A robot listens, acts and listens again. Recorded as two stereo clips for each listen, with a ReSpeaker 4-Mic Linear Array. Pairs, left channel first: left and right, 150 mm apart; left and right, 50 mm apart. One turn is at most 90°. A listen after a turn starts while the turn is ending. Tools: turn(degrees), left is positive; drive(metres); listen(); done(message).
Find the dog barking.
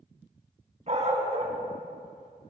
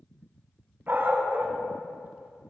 turn(degrees=-45)
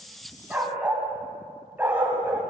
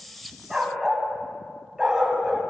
turn(degrees=-15)
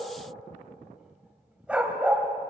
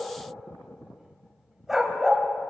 turn(degrees=-10)
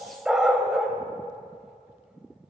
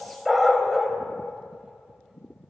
done("Found it: a dog barking, straight ahead, 2 to 4 m away.")